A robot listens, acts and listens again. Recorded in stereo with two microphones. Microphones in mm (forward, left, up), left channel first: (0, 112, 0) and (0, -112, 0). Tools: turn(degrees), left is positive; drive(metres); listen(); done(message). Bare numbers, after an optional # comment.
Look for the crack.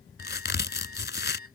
# The crack: about 50° left or 130° left.
turn(50)
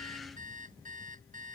listen()
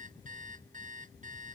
done("I heard a crack, but can't make it out now. It was about straight ahead or 80° left.")